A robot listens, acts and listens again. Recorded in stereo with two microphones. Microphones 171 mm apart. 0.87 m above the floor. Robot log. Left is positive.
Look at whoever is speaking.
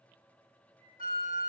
cmd idle
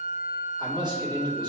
note: The man speaking: about 25° right or 155° right.
cmd yaw -25
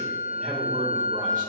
cmd idle
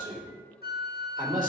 note: So it is at 130° right.
cmd yaw -130
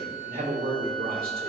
note: The man speaking is now 60° right.
cmd yaw -60
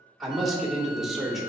end: Facing the man speaking.